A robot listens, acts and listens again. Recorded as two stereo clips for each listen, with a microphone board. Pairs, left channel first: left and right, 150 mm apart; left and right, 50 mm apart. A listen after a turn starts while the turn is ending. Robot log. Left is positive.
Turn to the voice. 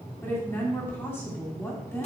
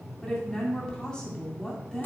note: The woman speaking: about 15° left or 165° left.
cmd yaw +15
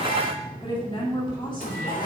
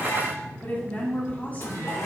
note: So it is at 145° left.
cmd yaw +145
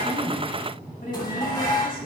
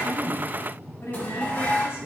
note: The woman speaking is now 60° left.
cmd yaw +60
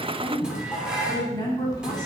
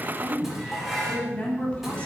note: The woman speaking is now 25° left.
cmd yaw +25
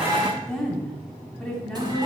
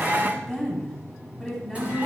end: Found it: a woman speaking, straight ahead.